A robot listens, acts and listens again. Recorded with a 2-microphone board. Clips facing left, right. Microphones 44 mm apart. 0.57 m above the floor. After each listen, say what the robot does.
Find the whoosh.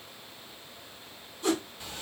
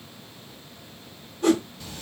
Turn 60° right.
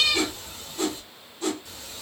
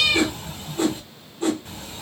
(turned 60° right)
Turn 30° right.
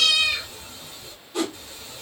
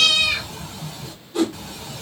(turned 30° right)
Found it: a whoosh, straight ahead, 2 to 4 m away.